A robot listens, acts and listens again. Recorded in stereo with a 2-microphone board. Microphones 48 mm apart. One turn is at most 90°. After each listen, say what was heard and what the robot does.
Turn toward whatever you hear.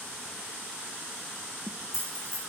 Turn 90° left.
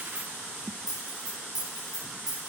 Found it: keys jangling, straight ahead.